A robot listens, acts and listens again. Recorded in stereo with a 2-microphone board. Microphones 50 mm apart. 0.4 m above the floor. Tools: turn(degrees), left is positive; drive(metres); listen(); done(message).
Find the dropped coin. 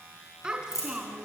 turn(degrees=90)
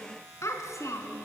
done("Facing where the dropped coin came from. I can't hear it now.")